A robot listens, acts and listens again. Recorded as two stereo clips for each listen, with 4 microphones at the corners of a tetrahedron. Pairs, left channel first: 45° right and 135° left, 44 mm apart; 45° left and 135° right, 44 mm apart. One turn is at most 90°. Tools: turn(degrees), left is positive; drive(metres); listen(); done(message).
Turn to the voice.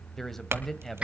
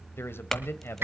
turn(degrees=40)
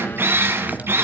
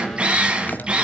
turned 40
listen()
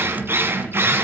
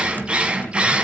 listen()
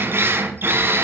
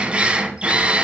done("I heard a man speaking from this way, but can't make it out now.")